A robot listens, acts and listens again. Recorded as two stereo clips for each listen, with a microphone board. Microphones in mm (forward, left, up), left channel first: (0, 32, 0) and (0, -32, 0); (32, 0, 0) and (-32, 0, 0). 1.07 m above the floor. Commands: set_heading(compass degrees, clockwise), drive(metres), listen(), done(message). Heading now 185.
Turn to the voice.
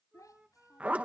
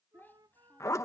set_heading(125)
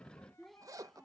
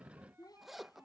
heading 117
done("Facing the child speaking.")